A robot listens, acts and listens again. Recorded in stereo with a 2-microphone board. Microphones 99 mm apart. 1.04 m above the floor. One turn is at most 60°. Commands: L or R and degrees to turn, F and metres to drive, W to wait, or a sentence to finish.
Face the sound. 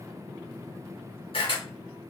L60
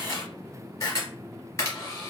L35
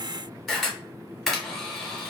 Facing the camera shutter.